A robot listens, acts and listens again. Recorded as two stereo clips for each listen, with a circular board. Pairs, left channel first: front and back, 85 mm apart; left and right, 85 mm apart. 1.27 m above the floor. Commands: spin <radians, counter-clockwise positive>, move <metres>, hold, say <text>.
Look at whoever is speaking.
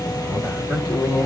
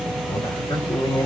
spin 1.66
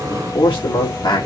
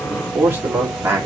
spin -0.52
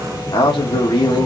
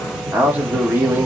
spin -0.44
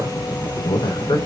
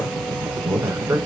spin -0.52
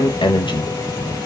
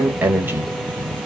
spin -0.44
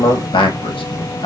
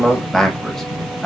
say Found it: a man speaking, straight ahead, 1 to 2 m away.